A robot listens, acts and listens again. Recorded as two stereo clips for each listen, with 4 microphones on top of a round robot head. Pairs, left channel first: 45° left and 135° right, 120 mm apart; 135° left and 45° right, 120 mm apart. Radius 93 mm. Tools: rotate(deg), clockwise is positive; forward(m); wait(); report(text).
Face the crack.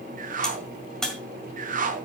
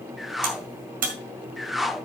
rotate(40)
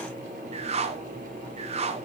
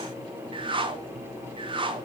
report("I heard a crack from this way, but can't make it out now.")